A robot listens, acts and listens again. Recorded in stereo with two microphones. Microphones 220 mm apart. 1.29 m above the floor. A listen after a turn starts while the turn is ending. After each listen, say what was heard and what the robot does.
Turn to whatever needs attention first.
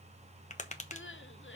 The crying: about 60° left or 120° left. Turn 60° left.
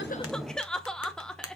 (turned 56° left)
Facing the crying.